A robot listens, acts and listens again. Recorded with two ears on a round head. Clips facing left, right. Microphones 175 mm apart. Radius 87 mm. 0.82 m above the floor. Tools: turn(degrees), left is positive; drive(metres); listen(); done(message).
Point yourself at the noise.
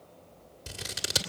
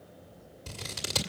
turn(degrees=30)
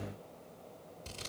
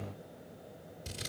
turn(degrees=-15)
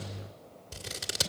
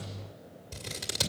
done("Found it: scissors, straight ahead, 1 to 2 m away.")